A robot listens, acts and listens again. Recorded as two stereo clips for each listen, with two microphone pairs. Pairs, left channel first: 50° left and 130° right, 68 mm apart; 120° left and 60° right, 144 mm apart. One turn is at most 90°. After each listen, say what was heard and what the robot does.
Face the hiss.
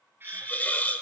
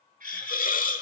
The hiss: 120° left. Turn 90° left.
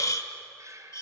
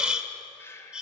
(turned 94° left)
The hiss is now 25° left. Turn 25° left.
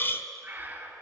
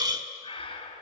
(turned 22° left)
Found it: a hiss, straight ahead.